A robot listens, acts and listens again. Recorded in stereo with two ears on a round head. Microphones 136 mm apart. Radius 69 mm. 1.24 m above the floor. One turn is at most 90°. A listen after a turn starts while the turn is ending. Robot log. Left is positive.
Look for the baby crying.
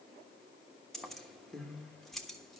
cmd idle
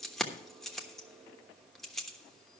cmd idle
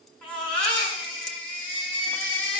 cmd yaw +30
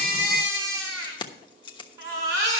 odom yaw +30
note: So it is at 20° right.
cmd yaw -20
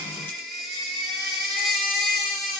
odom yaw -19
end: Found it: a baby crying, straight ahead, over 4 m away.